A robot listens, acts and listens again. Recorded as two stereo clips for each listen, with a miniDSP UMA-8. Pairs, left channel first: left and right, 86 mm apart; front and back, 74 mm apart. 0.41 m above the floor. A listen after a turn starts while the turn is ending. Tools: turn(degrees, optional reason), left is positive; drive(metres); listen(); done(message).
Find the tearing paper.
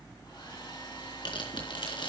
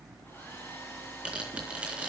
turn(degrees=105, reason="The tearing paper: 105° left.")
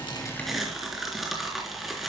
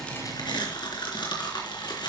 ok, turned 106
done("Found it: tearing paper, straight ahead, 2 to 4 m away.")